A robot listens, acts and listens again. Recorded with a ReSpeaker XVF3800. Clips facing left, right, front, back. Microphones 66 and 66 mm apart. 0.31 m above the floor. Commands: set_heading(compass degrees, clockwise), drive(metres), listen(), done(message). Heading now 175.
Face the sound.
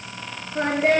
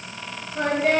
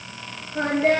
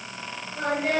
set_heading(140)
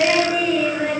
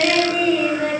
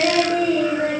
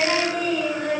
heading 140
done("Found it: singing, straight ahead, 2 to 4 m away.")